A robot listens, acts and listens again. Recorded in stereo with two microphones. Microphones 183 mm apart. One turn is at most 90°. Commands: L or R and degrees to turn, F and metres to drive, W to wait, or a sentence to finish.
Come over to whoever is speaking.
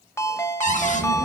R65
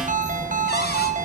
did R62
F1.0
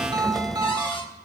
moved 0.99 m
F1.0
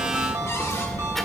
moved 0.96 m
F1.0
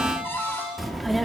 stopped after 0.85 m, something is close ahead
Arrived at the child speaking, straight ahead.